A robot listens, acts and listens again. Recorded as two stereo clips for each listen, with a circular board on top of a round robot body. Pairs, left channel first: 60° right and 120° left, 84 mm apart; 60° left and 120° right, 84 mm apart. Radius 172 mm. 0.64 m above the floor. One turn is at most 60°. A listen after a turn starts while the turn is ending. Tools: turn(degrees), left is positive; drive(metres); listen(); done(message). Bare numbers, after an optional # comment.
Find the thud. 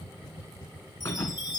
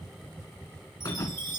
done("Found it: a thud, straight ahead, 1 to 2 m away.")